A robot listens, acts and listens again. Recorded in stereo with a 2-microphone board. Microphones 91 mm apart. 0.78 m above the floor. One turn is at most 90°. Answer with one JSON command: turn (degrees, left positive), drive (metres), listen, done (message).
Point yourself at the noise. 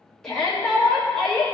{"turn": 30}
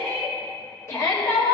{"turn": 90}
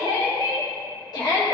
{"turn": 75}
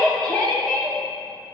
{"turn": 15}
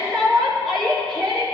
{"done": "Found it: a shout, straight ahead."}